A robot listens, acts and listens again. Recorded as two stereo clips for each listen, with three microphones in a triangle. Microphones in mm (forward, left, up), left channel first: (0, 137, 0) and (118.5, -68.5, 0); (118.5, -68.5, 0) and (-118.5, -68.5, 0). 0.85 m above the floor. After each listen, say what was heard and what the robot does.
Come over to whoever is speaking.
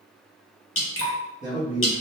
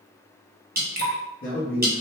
Drive 1.0 m forward.
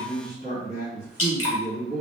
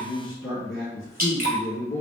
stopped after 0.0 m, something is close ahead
The man speaking is now 10° right. Turn 10° right.
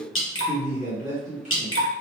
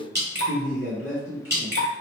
Something is in my way. I am facing the man speaking but have not reached it.